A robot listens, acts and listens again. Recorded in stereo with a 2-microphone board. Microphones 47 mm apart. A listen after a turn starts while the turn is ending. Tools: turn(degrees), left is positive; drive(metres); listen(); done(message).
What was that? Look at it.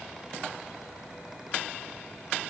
listen()
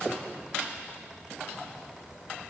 listen()
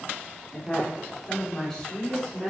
turn(degrees=30)
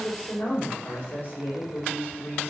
turn(degrees=145)
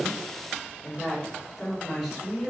done("Facing the woman speaking, 2 to 4 m away.")